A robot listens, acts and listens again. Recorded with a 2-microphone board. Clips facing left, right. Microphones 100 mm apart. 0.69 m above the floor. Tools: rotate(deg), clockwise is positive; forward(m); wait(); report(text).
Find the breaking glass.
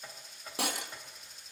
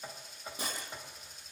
rotate(-90)
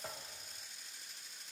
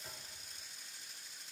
report("I heard breaking glass from this way, but can't make it out now.")